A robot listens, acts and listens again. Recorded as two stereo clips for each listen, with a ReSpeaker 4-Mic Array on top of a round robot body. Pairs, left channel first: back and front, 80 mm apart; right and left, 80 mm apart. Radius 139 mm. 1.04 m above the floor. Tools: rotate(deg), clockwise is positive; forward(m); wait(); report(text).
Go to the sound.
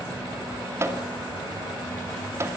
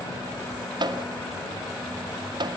rotate(-60)
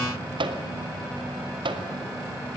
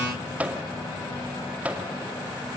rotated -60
rotate(-15)
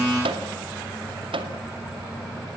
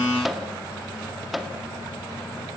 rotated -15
forward(1.0)
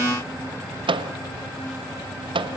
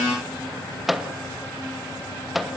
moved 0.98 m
forward(1.0)
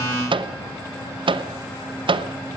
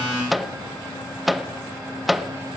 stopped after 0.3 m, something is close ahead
report("I am next to the microwave.")